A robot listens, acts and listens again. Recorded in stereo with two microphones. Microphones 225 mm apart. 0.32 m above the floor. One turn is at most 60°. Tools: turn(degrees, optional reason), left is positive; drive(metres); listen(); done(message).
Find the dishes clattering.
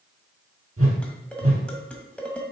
turn(degrees=30)
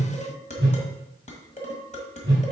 turn(degrees=60, reason="So it is at 140° left.")
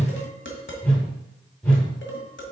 turn(degrees=60, reason="The dishes clattering is now 85° left.")
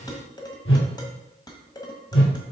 turn(degrees=20, reason="The dishes clattering is now 20° left.")
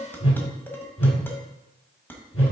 turn(degrees=10, reason="The dishes clattering is now 10° left.")
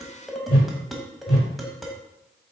done("Found it: dishes clattering, straight ahead, 1 to 2 m away.")